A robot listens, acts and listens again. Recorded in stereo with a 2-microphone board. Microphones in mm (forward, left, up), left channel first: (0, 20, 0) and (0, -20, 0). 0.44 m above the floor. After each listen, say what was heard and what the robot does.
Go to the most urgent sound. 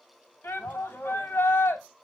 The shout: about 70° left or 110° left. Turn 70° left.
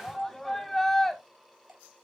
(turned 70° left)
So it is at 10° left. Turn 10° left.
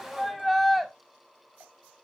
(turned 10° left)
Drive 1.0 m forward.
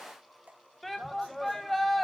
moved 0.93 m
Drive 1.0 m forward.
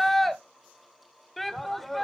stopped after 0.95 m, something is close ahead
Arrived at the shout, straight ahead.